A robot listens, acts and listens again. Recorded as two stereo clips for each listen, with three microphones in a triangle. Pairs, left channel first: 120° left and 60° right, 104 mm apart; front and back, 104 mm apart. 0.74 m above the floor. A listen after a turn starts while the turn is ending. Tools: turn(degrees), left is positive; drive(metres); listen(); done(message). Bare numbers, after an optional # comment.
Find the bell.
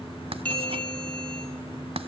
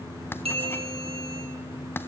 # The bell: 165° right.
turn(-165)
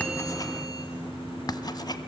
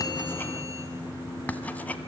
listen()
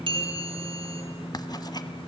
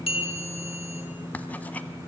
# The bell is now 25° right.
turn(-25)
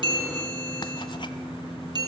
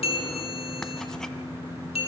# The bell is now 15° right.
turn(-15)
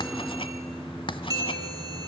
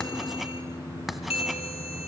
done("Facing the bell.")